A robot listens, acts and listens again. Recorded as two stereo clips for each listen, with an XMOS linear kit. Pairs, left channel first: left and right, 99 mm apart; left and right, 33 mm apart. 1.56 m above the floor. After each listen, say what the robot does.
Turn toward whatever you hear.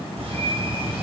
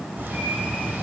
Turn 75° right.
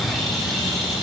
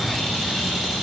Facing the bird, over 4 m away.